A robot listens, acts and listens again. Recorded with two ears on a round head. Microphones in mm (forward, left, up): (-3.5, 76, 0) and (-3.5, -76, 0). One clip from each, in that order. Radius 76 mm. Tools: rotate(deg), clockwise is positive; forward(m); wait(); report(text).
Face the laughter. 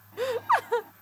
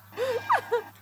rotate(-15)
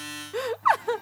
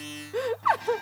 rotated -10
rotate(-35)
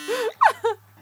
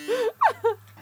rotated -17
rotate(-40)
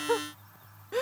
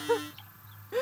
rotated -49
rotate(-25)
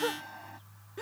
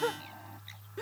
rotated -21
rotate(-15)
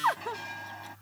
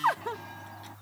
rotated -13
report("Facing the laughter.")